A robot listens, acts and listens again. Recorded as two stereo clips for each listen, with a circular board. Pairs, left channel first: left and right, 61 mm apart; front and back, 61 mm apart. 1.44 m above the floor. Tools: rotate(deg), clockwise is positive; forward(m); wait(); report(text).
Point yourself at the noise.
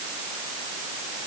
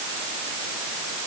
wait()
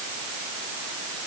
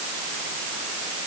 wait()
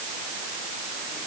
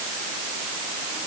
report("I can't make out anything to turn to.")